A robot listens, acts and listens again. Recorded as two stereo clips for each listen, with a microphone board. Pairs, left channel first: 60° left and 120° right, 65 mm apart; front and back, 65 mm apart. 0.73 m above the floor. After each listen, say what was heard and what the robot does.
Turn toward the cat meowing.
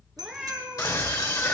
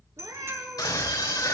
The cat meowing: 150° left. Turn 150° left.
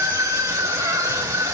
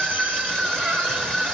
Keep listening.
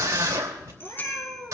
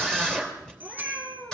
The cat meowing is now 70° left. Turn 70° left.
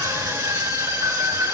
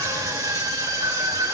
Keep listening.
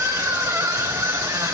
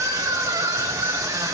Keep listening.
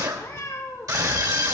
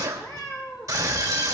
The cat meowing is now 10° left. Turn 10° left.
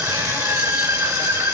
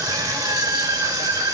Keep listening.
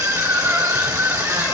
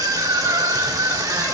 Keep listening.
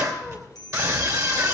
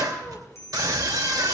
Facing where the cat meowing came from. I can't hear it now.